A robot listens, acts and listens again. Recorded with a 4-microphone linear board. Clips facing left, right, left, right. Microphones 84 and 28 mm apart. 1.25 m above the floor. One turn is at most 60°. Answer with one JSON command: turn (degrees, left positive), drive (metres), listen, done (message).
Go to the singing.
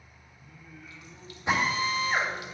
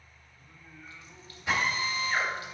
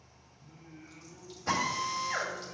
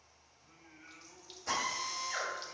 {"turn": -60}
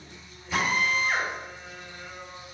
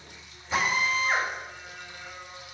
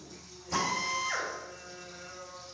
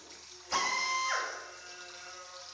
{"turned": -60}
{"turn": -30}
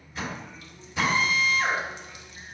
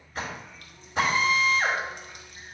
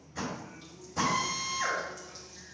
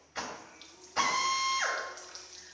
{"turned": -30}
{"listen": true}
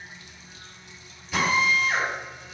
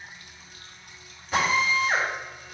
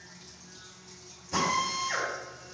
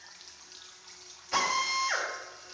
{"listen": true}
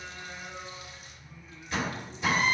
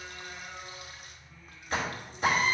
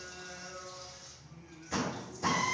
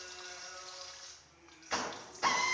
{"drive": 1.0}
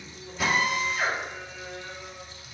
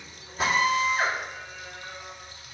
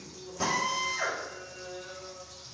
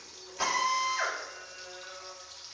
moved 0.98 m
{"turn": -10}
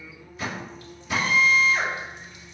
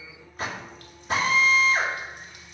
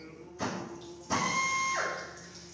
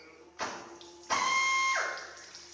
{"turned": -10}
{"drive": 1.0}
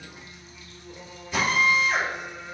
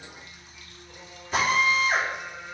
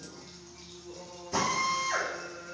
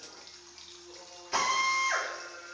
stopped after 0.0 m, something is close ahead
{"done": "Arrived at the singing, straight ahead."}